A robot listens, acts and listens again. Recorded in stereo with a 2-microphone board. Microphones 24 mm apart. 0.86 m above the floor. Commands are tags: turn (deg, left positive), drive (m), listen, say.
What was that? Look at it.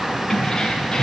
<turn deg="20"/>
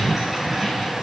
<listen/>
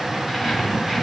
<say>Facing the keys jangling, over 4 m away.</say>